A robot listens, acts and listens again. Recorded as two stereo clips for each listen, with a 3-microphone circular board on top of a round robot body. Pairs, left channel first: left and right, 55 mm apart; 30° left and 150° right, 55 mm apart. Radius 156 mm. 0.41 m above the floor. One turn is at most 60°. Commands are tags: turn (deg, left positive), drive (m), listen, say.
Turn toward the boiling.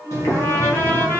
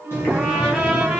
<turn deg="60"/>
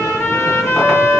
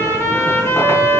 <listen/>
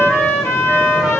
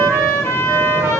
<listen/>
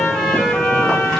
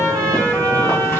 <say>I heard boiling from this way, but can't make it out now.</say>